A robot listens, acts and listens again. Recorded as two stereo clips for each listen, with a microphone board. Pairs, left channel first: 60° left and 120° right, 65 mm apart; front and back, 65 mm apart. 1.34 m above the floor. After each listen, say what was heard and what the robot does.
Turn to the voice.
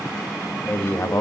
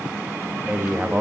The man speaking: 110° left. Turn 110° left.
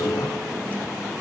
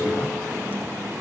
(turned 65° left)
Nothing new. It was at 45° left. Turn 45° left.
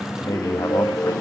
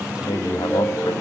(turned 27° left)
The man speaking is now 20° left. Turn 20° left.
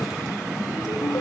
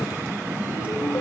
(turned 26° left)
Nothing new. It was at 10° right. Turn 10° right.
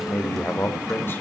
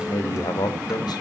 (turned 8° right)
Facing the man speaking, 2 to 4 m away.